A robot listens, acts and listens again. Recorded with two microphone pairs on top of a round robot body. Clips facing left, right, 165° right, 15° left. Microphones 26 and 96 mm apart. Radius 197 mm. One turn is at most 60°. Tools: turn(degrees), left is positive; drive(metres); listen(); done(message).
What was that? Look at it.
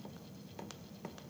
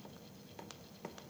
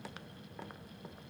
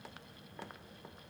listen()
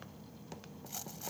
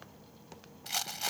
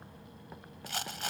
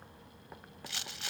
turn(degrees=-60)
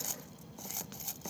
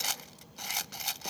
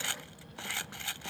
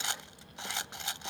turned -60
turn(degrees=-55)
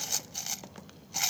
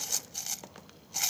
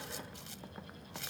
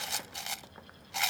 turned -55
turn(degrees=10)
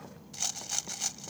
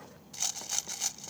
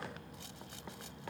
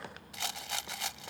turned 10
done("Found it: a rattle, straight ahead.")